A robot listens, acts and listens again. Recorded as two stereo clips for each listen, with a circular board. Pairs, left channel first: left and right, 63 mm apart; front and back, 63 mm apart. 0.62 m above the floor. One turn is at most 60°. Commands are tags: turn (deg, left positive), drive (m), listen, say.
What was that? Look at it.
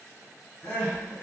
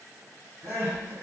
<turn deg="60"/>
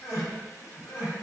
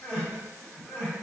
<turn deg="60"/>
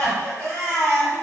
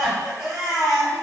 <turn deg="20"/>
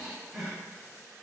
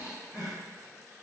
<say>Found it: crying, straight ahead.</say>